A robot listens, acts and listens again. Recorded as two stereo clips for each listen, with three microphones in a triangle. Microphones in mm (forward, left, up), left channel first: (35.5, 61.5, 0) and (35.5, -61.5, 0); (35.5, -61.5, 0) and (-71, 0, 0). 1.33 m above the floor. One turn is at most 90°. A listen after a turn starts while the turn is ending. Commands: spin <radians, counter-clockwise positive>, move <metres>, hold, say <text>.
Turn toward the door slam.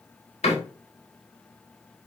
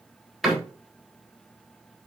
spin 1.05
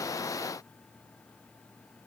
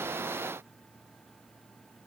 say I heard a door slam from this way, but can't make it out now.